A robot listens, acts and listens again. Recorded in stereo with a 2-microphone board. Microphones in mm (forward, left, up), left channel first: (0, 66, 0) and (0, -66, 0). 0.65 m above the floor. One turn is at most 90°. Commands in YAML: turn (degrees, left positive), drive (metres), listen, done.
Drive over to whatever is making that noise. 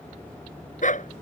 turn: 65
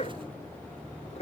turn: 50
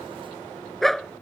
drive: 1.0
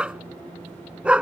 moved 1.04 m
turn: -10
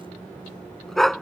drive: 1.0
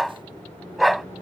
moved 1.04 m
drive: 1.0
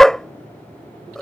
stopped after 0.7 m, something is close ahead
done: "I am next to the dog barking."